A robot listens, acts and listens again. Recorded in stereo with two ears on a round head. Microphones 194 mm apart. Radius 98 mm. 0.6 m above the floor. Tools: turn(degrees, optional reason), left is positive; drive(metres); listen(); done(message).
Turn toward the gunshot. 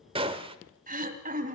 turn(degrees=-25, reason="The gunshot: about 25° right or 155° right.")
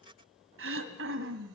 listen()
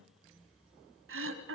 done("I heard a gunshot, but can't make it out now. It was about straight ahead or 130° right.")